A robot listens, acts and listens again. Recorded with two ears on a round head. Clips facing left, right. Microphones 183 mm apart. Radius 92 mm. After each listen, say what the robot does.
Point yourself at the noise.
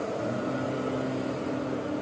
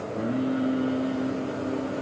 Turn 90° right.
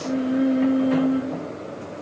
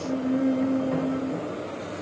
Turn 20° left.
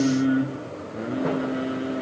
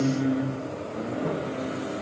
Turn 20° left.
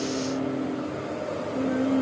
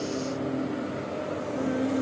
Facing the singing.